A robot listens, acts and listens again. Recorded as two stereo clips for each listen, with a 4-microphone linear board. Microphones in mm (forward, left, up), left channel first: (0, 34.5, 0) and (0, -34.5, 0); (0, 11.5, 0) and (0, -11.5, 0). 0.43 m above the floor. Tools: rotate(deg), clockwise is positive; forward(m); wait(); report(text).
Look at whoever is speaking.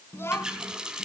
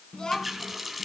rotate(-35)
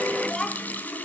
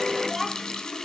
rotate(-10)
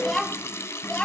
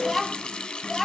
rotate(-10)
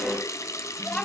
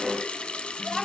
rotate(-15)
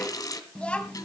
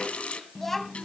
rotate(-20)
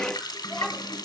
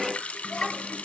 wait()
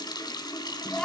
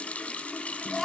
rotate(-10)
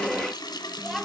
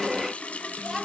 report("Facing the child speaking, 1 to 2 m away.")